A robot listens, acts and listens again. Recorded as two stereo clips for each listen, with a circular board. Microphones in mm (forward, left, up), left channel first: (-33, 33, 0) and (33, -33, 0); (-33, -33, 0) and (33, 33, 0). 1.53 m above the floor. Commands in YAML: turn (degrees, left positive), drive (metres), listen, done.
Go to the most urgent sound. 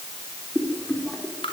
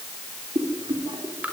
listen: true
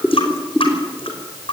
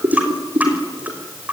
listen: true
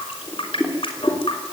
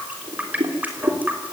done: "I can't make out anything urgent, only a running tap and boiling."